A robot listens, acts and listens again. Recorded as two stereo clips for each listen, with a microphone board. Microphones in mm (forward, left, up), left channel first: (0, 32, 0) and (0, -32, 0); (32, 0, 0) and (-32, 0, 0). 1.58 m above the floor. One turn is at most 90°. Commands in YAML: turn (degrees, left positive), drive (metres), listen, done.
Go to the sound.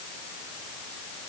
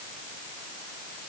listen: true
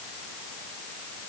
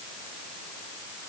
listen: true
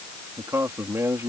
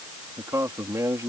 turn: -90
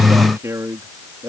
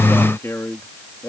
turn: -45
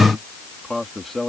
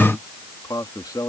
drive: 1.0
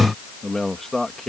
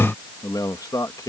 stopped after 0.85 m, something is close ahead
done: "Something is in my way. I am facing the man speaking but have not reached it."